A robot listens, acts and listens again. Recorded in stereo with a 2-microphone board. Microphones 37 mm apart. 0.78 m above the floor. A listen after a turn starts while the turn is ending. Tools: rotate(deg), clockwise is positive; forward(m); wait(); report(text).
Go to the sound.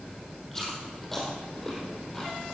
rotate(-30)
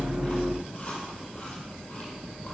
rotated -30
rotate(-145)
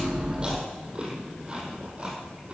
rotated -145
rotate(25)
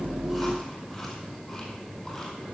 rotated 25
rotate(-20)
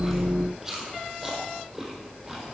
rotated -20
forward(1.0)
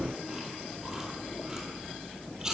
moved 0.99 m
rotate(10)
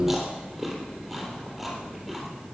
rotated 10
forward(1.0)
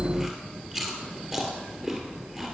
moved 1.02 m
forward(1.0)
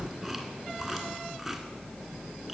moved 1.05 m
forward(1.0)
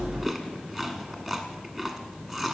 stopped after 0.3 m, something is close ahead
report("Arrived at the chewing, straight ahead.")